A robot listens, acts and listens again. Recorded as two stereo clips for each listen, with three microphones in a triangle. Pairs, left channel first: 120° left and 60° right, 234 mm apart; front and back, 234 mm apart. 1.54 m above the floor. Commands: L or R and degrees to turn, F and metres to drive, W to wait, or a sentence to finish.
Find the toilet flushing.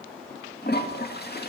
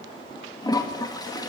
L75
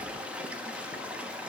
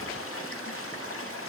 L25
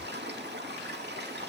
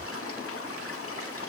R20
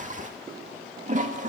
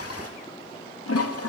Facing the toilet flushing.